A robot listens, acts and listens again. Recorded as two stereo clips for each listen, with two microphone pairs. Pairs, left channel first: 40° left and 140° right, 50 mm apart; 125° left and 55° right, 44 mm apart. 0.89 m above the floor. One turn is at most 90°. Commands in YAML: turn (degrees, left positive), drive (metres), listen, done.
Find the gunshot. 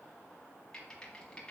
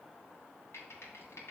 listen: true
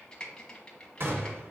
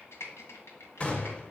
turn: -90
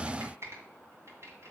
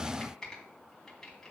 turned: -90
turn: -85
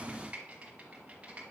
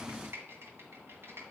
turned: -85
done: "Facing where the gunshot came from. I can't hear it now."